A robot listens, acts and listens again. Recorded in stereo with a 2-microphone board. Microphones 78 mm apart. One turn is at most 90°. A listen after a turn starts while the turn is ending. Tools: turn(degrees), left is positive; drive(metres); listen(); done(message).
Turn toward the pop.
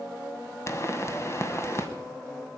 turn(degrees=35)
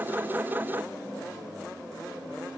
listen()
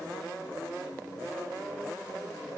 done("I heard a pop, but can't make it out now. It was about straight ahead or 110° left.")